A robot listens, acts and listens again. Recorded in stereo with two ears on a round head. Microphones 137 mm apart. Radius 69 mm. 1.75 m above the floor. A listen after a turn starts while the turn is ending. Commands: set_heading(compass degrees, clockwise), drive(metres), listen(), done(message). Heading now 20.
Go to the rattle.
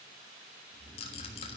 set_heading(340)
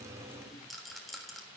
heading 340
drive(1.0)
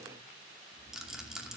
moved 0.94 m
drive(1.0)
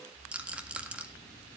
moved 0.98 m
set_heading(350)
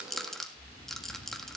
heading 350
drive(1.0)
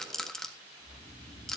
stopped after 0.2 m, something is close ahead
done("Arrived at the rattle, straight ahead.")